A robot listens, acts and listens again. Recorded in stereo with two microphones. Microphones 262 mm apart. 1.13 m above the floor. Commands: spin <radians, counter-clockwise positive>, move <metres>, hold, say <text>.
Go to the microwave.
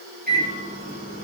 spin -0.61
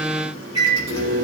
spin -1.92
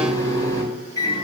spin 0.17
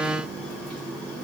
move 1.0
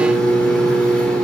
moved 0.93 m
move 1.0
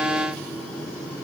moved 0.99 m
move 1.0
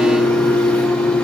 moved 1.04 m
move 1.0
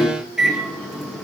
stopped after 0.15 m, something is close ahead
say Arrived at the microwave, straight ahead.